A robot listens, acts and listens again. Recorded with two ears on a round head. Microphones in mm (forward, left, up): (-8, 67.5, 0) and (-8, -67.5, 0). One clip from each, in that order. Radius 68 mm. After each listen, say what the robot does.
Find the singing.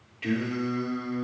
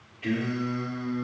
Turn 45° left.
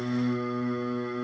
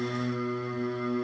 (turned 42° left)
Turn 115° left.
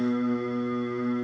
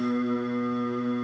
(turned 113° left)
Facing the singing.